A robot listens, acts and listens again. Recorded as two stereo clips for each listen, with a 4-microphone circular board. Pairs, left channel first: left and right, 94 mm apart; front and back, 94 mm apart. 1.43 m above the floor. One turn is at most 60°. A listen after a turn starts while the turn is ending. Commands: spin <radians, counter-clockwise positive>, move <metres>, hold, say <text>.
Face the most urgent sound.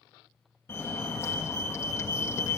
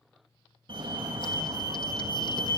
spin 1.05
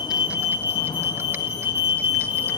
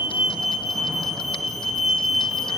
spin 1.05
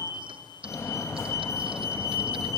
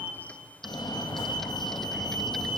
spin 0.52
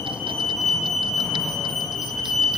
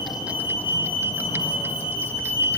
say Facing the fire alarm.